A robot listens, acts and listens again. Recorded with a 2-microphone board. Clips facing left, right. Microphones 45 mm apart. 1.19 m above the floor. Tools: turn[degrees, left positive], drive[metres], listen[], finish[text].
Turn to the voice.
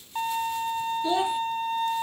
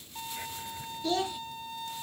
Thought: The child speaking: about 15° left or 165° left.
Action: turn[15]
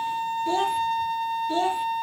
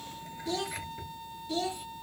Thought: So it is at 150° left.
Action: turn[150]
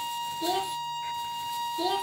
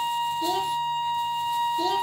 Action: listen[]
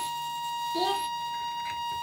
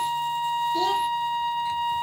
Action: listen[]
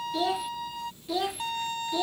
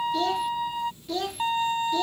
Action: finish[Found it: a child speaking, straight ahead.]